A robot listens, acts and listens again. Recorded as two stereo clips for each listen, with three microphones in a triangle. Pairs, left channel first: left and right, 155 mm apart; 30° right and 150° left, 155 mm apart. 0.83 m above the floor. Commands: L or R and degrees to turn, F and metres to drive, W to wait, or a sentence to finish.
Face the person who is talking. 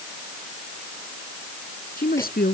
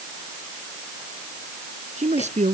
L110
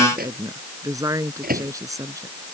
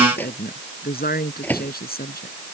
R20
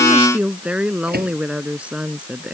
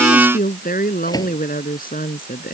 Found it: a woman speaking, straight ahead.